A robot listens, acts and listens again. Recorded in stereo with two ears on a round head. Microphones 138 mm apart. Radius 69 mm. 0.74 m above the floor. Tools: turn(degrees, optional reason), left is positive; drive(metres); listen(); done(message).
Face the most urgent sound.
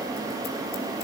listen()
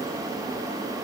listen()
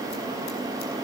done("I can't make out anything urgent to turn to.")